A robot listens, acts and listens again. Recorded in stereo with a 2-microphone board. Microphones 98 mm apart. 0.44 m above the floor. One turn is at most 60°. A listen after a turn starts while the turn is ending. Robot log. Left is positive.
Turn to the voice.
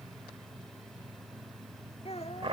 cmd yaw +60
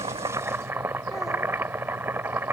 note: Nothing new. It was at 30° left.
cmd yaw +30
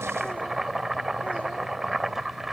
cmd idle
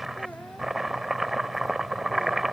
end: I heard a child speaking from this way, but can't make it out now.